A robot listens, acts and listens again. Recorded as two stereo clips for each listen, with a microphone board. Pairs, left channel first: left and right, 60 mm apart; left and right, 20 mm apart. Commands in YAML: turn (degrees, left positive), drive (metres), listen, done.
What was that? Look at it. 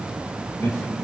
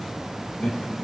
turn: 45
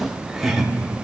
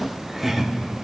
done: "Facing the laughter, 1 to 2 m away."